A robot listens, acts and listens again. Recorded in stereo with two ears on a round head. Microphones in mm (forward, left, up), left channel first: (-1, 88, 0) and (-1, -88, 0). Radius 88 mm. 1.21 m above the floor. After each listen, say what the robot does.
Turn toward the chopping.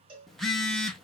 Keep listening.
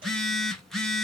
Keep listening.
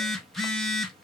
I can't make out chopping to turn to.